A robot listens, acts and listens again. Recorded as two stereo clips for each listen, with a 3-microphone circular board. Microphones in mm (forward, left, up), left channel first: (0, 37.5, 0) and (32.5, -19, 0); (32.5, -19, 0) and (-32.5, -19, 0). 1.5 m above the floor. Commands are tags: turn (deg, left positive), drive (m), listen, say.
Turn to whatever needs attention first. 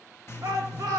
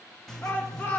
<turn deg="-55"/>
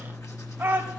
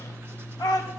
<say>Found it: a shout, straight ahead.</say>